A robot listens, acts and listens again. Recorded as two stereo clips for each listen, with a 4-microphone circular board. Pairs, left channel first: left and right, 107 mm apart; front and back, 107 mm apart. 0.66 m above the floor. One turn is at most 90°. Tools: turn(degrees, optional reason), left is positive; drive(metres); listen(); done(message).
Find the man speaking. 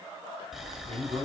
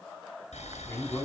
turn(degrees=-65, reason="The man speaking: 65° right.")
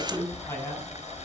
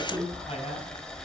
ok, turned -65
turn(degrees=25, reason="The man speaking is now 25° left.")
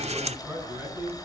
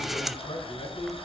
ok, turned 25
turn(degrees=-15, reason="The man speaking is now 15° right.")
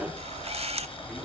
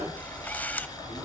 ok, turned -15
listen()
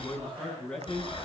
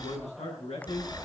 turn(degrees=10, reason="The man speaking is now 10° left.")
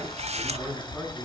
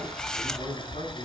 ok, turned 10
done("Facing the man speaking, over 4 m away.")